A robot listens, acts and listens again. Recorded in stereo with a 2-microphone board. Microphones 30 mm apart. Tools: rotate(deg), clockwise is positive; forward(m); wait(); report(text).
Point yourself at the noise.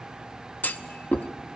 rotate(-90)
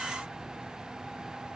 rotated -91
report("I heard a clunk from this way, but can't make it out now.")